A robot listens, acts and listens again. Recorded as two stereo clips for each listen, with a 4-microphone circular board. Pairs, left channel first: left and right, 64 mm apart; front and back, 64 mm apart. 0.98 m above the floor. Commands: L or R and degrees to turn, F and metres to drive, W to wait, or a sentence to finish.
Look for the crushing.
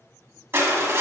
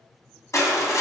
R40
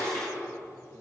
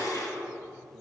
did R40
L10
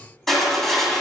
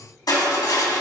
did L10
Facing the crushing, 1 to 2 m away.